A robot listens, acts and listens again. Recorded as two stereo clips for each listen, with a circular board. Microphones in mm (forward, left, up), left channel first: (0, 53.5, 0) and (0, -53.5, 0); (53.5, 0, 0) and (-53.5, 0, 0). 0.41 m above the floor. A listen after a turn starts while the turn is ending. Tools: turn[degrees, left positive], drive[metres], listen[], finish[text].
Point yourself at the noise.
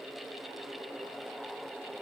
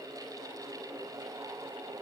Action: listen[]
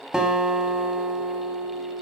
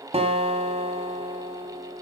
Thought: The guitar: 175° right.
Action: turn[-175]
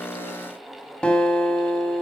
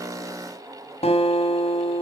Thought: The guitar is now 10° left.
Action: turn[10]
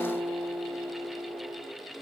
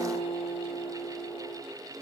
Action: finish[Found it: a guitar, straight ahead, 1 to 2 m away.]